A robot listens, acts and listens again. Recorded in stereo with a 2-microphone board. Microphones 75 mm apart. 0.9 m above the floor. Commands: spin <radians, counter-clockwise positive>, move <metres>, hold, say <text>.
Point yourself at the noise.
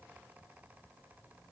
hold
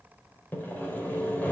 spin 0.44
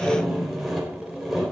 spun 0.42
say Facing the sawing.